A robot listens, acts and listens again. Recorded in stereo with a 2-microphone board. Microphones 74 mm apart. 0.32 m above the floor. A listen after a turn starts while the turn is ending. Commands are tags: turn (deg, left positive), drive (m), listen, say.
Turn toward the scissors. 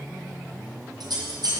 <turn deg="-65"/>
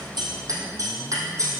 <turn deg="-45"/>
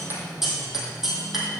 <say>Found it: scissors, straight ahead, 2 to 4 m away.</say>